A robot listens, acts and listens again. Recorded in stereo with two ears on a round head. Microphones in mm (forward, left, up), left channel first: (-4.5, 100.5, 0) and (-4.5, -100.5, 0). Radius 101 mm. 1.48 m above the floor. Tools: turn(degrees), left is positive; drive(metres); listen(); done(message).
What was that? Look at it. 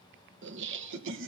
turn(degrees=-70)
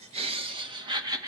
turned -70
turn(degrees=-15)
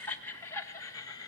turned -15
turn(degrees=20)
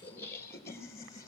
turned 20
turn(degrees=15)
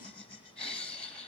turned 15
done("Facing the laughter.")